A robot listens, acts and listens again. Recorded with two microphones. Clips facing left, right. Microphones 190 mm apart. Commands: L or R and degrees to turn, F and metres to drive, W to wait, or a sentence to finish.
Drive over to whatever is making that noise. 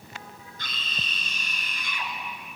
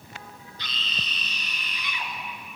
L50
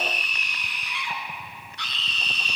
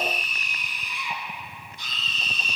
L80
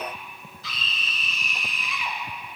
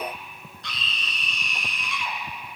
F1.0
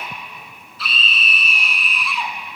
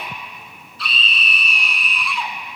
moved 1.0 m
F1.0
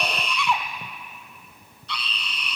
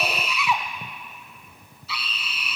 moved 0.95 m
F1.0
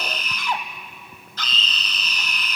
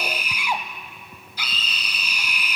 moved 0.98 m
R10
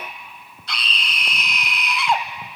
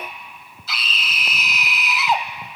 F1.0
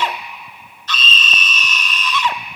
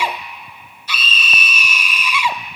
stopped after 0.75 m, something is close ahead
R15
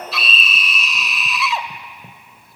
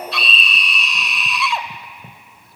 I am next to the scream.